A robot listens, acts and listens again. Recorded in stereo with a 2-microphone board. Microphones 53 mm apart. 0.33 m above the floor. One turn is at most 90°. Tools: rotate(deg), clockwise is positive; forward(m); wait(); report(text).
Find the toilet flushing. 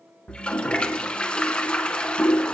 rotate(-20)
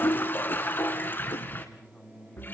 rotate(-90)
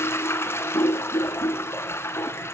rotate(-50)
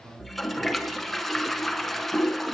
report("Found it: a toilet flushing, straight ahead.")